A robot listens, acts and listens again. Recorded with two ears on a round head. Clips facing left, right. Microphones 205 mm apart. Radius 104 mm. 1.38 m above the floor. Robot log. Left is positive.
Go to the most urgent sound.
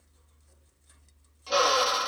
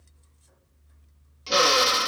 cmd idle
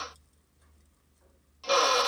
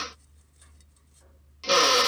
cmd idle
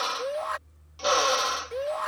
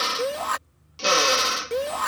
note: The shout: about 65° right or 115° right.
cmd yaw -65
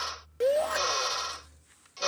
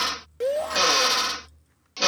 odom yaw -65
cmd fwd 1.0
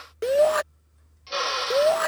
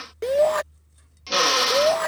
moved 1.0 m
cmd fwd 1.0
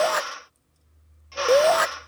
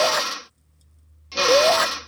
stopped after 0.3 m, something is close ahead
end: Arrived at the shout, straight ahead.